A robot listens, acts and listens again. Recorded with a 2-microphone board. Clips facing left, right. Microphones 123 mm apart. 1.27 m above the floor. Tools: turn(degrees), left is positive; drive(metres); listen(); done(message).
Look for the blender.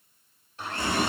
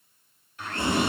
turn(degrees=30)
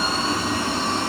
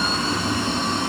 listen()
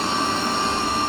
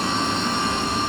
listen()
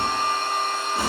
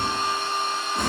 turn(degrees=120)
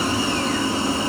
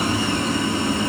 listen()
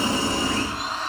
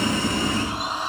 turn(degrees=-20)
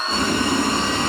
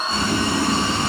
done("Facing the blender, over 4 m away.")